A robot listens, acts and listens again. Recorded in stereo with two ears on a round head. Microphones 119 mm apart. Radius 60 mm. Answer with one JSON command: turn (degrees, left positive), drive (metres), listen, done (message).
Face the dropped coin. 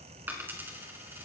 {"turn": -15}
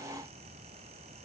{"listen": true}
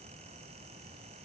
{"done": "I heard a dropped coin, but can't make it out now. It was about straight ahead or 150° right."}